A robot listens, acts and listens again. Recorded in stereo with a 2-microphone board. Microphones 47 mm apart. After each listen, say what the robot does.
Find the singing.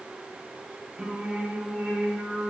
Turn 30° left.
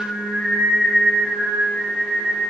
Turn 100° left.
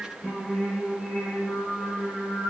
Turn 15° left.
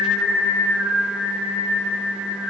Facing the singing.